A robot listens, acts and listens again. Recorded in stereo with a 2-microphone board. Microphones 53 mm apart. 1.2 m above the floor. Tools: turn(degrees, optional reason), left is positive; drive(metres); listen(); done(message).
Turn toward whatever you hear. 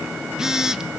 turn(degrees=-30)
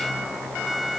listen()
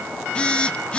turn(degrees=20, reason="So it is at 20° left.")
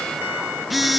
done("Facing the phone buzzing, under 1 m away.")